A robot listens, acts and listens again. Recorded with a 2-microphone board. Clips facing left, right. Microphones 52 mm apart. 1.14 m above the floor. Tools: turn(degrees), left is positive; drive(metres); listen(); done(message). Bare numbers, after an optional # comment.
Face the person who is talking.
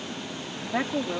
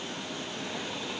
# The woman speaking: about 75° left or 105° left.
turn(75)
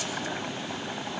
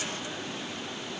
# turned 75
listen()
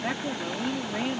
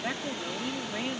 done("Facing the woman speaking.")